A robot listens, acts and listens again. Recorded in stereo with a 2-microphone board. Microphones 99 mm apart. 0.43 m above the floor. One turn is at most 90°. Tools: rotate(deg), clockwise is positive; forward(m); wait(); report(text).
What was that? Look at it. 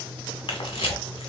rotate(-65)
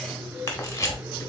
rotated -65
rotate(-35)
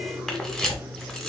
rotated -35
report("Facing the camera shutter, 1 to 2 m away.")